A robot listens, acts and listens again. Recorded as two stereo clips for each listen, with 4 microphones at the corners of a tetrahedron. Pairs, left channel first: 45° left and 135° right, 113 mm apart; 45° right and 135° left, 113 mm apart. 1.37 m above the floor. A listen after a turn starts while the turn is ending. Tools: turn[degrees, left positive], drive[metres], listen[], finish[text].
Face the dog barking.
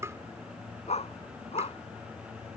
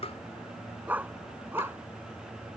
Thought: The dog barking: 65° left.
Action: turn[65]
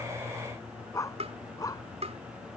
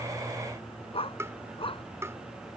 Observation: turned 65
Thought: The dog barking is now 10° right.
Action: turn[-10]
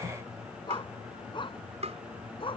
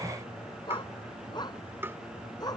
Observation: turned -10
Action: finish[Found it: a dog barking, straight ahead.]